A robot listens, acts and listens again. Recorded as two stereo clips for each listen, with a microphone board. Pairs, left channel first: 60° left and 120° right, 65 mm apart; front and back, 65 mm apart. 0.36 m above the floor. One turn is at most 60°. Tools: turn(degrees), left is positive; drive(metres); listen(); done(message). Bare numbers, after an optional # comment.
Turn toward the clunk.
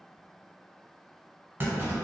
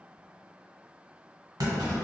# The clunk: 175° right.
turn(-60)
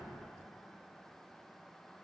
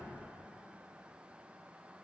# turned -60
# Nothing new. It was at 115° right.
turn(-60)
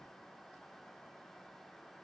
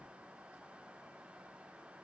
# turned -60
# Nothing new. It was at 55° right.
turn(-55)
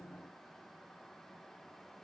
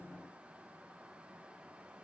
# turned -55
done("Facing where the clunk came from. I can't hear it now.")